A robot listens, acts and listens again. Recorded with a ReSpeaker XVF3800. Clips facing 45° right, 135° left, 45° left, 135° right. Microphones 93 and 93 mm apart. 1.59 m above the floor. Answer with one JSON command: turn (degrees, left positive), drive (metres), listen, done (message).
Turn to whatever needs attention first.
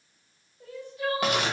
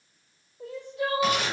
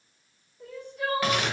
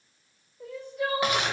{"turn": 135}
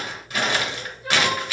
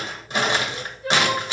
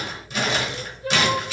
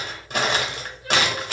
{"turn": 40}
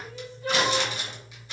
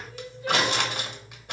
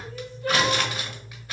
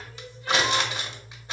{"done": "Facing the crying, 1 to 2 m away."}